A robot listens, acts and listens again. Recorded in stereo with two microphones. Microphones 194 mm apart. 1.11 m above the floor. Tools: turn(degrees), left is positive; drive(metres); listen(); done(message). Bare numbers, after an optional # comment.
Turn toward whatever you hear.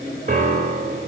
# The piano: about 40° right or 140° right.
turn(-40)
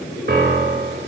# So it is at 90° right.
turn(-90)
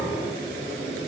listen()
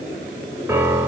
# The piano is now 15° right.
turn(-15)
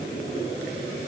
listen()
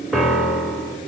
done("Facing the piano.")